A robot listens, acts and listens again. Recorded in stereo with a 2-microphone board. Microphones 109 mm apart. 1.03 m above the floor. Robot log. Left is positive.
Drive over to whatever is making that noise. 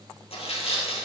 note: The tearing paper: about 70° left or 110° left.
cmd yaw +70
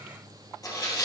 note: So it is at 30° left.
cmd yaw +30
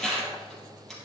cmd fwd 1.0
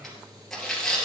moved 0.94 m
cmd fwd 1.0
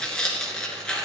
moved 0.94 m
cmd fwd 1.0
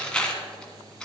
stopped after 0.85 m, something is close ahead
note: The tearing paper is now 10° left.
cmd yaw +10
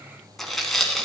end: I am next to the tearing paper.